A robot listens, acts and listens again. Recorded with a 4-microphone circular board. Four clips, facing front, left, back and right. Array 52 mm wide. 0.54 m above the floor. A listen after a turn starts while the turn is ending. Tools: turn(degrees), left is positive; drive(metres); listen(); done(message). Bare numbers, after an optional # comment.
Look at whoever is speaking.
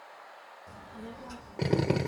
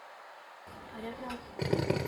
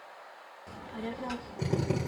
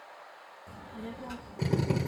# The child speaking: 160° left.
turn(160)
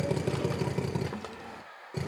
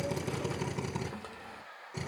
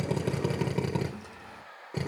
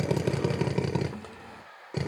done("Facing the child speaking.")